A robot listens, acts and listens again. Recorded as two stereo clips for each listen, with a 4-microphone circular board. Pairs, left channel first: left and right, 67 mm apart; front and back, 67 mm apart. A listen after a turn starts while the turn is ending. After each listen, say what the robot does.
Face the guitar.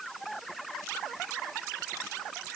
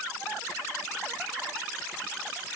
Keep listening.
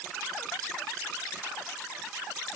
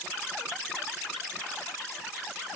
Keep listening.
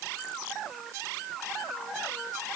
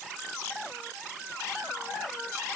I can't make out a guitar.